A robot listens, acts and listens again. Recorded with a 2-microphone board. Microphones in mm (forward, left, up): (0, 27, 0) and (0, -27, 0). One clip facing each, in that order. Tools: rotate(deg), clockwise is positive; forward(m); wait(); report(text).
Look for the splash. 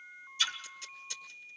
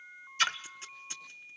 rotate(55)
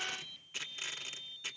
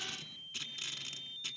wait()
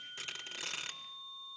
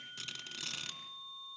report("I heard a splash, but can't make it out now. It was about straight ahead or 70° right.")